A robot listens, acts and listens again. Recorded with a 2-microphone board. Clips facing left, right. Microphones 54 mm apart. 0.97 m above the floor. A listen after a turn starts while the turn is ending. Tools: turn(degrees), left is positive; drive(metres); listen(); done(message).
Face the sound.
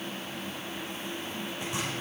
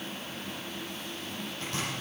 turn(degrees=15)
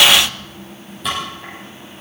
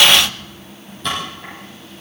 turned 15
done("Found it: chopping, straight ahead, over 4 m away.")